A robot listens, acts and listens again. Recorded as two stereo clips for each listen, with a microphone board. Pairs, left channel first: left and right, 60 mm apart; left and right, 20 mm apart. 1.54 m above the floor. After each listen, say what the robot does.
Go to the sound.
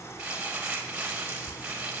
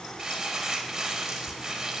Turn 20° right.
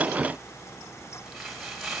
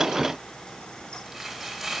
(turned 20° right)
Drive 1.0 m forward.
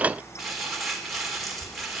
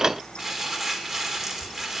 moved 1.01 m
Drive 1.0 m forward.
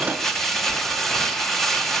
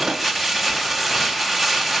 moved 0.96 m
Drive 1.0 m forward.
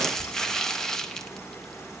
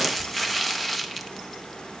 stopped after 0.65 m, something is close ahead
Turn 10° left.
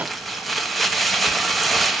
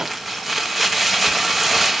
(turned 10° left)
I am next to the crumpling.